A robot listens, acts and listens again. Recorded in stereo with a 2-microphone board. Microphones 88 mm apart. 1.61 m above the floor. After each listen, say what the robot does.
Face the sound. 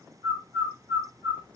Turn 60° left.
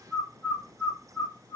Turn 60° left.
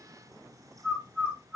Turn 25° left.
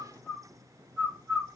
Turn 30° left.
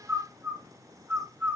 Turn 10° right.
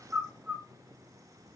Found it: a bird, straight ahead.